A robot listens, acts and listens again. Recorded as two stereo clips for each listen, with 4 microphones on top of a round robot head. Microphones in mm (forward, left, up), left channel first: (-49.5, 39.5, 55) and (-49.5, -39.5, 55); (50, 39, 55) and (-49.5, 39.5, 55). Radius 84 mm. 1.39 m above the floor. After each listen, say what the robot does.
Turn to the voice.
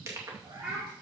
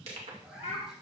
Turn 10° right.
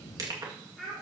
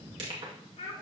Found it: a child speaking, straight ahead.